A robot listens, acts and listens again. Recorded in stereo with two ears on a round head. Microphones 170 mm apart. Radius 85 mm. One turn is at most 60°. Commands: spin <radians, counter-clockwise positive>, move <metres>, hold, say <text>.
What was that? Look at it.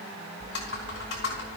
spin 1.05
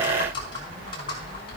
spin 0.44
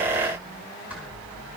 spin -0.17
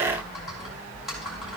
say Found it: typing on a keyboard, straight ahead, over 4 m away.